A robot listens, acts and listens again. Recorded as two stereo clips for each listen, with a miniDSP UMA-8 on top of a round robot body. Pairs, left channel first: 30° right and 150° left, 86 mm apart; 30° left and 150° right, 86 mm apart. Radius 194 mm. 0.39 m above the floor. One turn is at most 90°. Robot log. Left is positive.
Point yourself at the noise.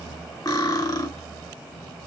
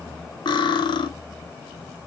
note: The cutlery clinking: 10° left.
cmd yaw +10
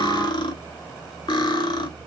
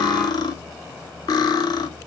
end: Facing the cutlery clinking, under 1 m away.